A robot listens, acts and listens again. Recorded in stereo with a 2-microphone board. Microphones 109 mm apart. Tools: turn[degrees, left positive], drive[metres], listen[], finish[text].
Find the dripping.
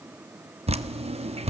Thought: The dripping: about 65° right or 115° right.
Action: turn[-65]
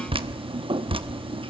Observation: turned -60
Thought: So it is at 50° right.
Action: turn[-50]
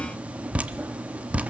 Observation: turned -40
Thought: The dripping is now 10° right.
Action: turn[-10]
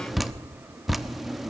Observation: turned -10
Action: finish[Found it: dripping, straight ahead, under 1 m away.]